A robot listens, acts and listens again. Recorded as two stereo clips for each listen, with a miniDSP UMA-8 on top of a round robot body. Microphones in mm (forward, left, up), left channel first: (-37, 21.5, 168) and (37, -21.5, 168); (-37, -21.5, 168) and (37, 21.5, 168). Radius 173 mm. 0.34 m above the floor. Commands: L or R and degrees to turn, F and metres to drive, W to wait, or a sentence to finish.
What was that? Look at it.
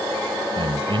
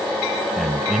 R55
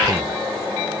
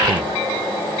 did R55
W
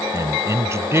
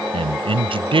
L30
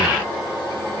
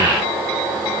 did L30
W
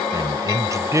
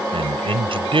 L25
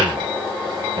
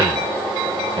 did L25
W
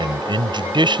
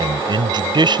Facing the man speaking.